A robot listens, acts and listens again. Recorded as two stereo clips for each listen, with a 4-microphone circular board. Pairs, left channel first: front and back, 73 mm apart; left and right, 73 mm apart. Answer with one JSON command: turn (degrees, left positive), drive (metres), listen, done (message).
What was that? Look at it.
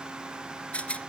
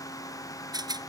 {"turn": -75}
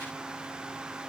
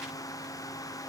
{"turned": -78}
{"listen": true}
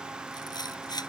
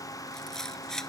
{"done": "Found it: a rattle, straight ahead."}